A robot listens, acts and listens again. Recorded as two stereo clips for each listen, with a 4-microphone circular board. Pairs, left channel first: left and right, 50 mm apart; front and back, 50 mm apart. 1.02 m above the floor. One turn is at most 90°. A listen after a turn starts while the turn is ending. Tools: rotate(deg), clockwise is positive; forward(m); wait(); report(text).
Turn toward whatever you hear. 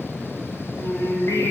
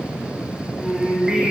rotate(-90)
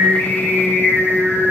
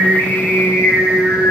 rotate(-35)
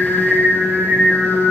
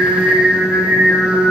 rotate(-25)
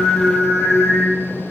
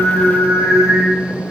report("Found it: singing, straight ahead, 2 to 4 m away.")